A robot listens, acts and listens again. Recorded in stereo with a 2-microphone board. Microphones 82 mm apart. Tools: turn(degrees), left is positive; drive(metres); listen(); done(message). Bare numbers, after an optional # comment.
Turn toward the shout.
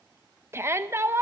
# The shout: about 30° right or 150° right.
turn(-30)
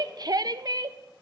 # So it is at 120° right.
turn(-120)
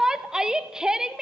# The shout is now 10° right.
turn(-10)
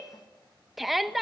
done("Found it: a shout, straight ahead, under 1 m away.")